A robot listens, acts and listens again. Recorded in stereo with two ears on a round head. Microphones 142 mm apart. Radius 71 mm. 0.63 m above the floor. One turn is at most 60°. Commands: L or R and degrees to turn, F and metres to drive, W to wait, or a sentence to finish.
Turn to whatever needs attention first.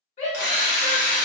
L45
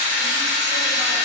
W
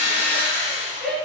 Found it: a shout, straight ahead.